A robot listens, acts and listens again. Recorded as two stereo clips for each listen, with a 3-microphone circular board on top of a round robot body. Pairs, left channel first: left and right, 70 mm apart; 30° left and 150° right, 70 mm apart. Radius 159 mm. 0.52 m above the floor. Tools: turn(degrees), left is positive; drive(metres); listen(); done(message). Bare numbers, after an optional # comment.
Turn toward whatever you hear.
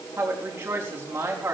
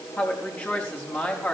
# The woman speaking: 30° right.
turn(-30)
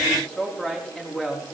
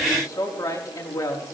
# The woman speaking is now 15° left.
turn(15)
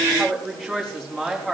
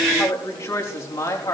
done("Facing the woman speaking.")